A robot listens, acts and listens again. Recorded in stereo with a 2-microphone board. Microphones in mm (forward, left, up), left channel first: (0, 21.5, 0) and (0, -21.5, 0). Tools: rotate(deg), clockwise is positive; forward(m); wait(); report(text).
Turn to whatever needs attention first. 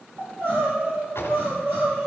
rotate(60)
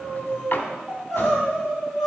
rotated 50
report("Facing the crying.")